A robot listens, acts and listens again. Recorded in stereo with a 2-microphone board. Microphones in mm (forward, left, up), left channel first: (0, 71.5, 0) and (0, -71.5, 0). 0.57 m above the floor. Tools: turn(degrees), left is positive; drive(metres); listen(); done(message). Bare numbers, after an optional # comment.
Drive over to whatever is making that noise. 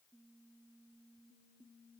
listen()
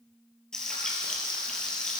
turn(30)
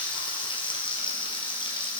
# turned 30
# So it is at 145° left.
turn(145)
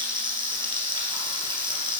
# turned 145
# The frying is now 35° right.
turn(-35)
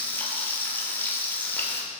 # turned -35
# The frying is now 15° left.
turn(15)
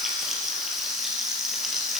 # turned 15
drive(1.0)
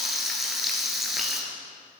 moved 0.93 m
drive(1.0)
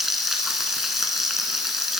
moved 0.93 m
drive(1.0)
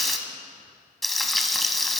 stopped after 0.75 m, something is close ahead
done("Arrived at the frying, straight ahead.")